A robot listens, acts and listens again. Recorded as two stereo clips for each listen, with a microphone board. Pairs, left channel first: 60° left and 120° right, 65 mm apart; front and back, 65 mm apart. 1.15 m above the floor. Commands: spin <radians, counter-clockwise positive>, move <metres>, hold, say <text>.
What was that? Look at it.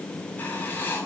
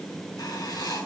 say Facing the writing, over 4 m away.